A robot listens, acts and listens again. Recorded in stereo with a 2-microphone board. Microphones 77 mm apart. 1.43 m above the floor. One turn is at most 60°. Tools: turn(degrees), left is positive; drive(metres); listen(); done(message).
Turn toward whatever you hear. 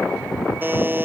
turn(degrees=-30)
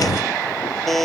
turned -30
done("Facing the buzzer.")